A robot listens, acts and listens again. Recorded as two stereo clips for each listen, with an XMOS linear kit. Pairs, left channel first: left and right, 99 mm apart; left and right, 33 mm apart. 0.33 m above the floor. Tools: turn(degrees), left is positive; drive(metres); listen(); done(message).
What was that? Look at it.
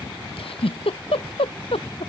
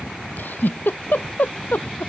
turn(degrees=70)
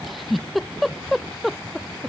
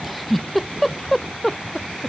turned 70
done("Facing the giggle.")